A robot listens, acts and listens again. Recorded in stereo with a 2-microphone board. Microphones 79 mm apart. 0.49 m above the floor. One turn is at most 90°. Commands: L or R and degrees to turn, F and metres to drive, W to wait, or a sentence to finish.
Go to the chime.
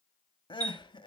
R60
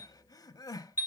R30
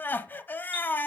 W
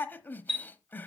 F1.0
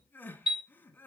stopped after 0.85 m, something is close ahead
R10
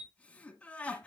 W
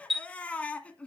I am next to the chime.